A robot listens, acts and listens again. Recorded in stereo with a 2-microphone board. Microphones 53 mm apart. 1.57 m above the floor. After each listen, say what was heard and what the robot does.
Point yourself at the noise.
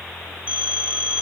The phone ringing: about 25° right or 155° right. Turn 25° right.
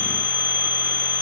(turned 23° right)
So it is at 130° right. Turn 130° right.
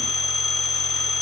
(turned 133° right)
Found it: a phone ringing, straight ahead.